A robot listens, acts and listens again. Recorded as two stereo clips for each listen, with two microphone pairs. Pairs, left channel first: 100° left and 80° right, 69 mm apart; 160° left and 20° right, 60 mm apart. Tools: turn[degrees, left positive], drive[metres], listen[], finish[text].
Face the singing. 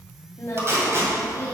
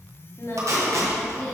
Thought: The singing: 145° left.
Action: turn[145]
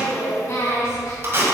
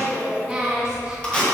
Thought: The singing is now 60° left.
Action: turn[60]
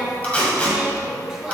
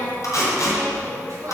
Action: finish[Found it: singing, straight ahead, 2 to 4 m away.]